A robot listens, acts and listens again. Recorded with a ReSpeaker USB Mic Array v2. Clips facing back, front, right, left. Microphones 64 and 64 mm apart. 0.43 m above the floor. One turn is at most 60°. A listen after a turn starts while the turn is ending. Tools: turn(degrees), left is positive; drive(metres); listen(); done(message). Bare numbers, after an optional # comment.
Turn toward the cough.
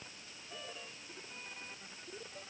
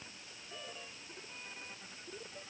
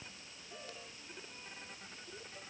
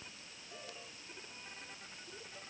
listen()
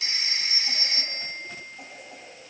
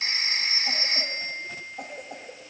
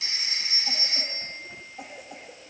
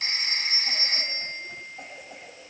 done("Facing the cough, 2 to 4 m away.")